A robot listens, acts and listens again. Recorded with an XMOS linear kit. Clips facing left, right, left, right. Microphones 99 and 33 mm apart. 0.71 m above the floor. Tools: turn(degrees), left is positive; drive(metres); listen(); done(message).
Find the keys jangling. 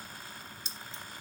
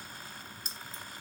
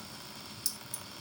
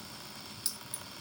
turn(degrees=-45)
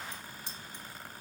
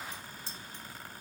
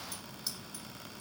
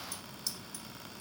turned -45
turn(degrees=15)
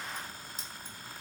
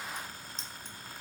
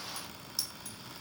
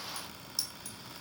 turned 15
turn(degrees=10)
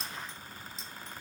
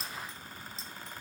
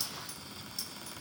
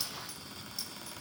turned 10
done("Facing the keys jangling.")